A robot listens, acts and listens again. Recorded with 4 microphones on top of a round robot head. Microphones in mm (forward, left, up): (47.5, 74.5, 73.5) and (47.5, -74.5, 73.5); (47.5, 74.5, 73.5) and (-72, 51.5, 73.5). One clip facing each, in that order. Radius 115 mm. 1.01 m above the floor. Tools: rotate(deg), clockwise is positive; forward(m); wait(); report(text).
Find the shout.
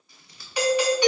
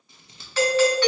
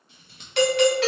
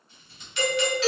wait()
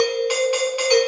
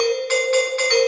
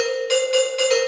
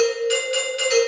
wait()
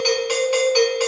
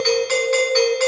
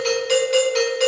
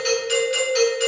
report("I can't make out a shout to turn to.")